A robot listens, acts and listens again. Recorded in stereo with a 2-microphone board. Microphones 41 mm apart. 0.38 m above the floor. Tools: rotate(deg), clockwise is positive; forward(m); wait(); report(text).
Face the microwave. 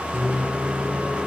rotate(30)
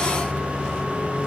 rotate(-20)
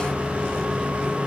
report("Found it: a microwave, straight ahead, over 4 m away.")